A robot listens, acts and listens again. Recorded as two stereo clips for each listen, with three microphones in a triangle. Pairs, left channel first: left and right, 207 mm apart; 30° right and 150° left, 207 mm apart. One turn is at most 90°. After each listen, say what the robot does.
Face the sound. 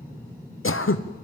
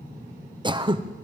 Turn 85° left.
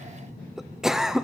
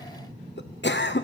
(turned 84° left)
Found it: throat clearing, straight ahead.